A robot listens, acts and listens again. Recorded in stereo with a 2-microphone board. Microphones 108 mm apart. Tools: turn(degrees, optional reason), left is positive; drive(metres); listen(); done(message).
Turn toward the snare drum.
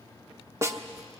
turn(degrees=-25, reason="The snare drum: about 25° right or 155° right.")
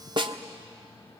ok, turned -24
turn(degrees=-125, reason="So it is at 125° right.")
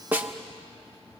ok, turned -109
turn(degrees=-15, reason="The snare drum is now 15° right.")
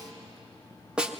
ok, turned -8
turn(degrees=-10, reason="The snare drum is now 10° right.")
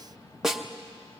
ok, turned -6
done("Facing the snare drum.")